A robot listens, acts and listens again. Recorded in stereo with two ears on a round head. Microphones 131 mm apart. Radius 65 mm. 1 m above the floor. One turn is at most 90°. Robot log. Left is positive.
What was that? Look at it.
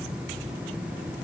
cmd idle
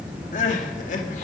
note: The crying: about 55° left or 125° left.
cmd yaw +55
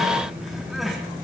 cmd idle
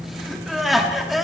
end: Facing the crying, 1 to 2 m away.